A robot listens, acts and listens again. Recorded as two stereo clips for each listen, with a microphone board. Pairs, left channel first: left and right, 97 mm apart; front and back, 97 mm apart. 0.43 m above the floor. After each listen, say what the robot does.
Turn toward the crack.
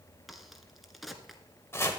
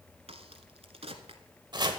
Turn 180° left.
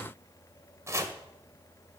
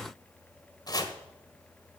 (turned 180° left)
Facing where the crack came from. I can't hear it now.